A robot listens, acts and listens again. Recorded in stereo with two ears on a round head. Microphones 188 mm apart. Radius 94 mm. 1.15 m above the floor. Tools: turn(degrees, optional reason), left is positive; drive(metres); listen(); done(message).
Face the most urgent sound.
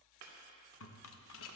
listen()
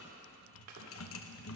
listen()
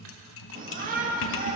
turn(degrees=-40, reason="The shout: about 40° right or 140° right.")
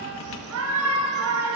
turn(degrees=-95, reason="So it is at 95° right.")
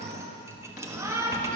turn(degrees=-15, reason="The shout is now 15° right.")
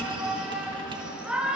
done("Found it: a shout, straight ahead.")